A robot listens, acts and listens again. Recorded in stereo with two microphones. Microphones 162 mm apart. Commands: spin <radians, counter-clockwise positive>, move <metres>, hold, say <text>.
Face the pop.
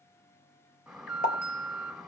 spin 0.96
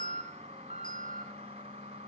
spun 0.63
hold
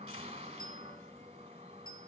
say I heard a pop, but can't make it out now. It was about 20° left or 85° left.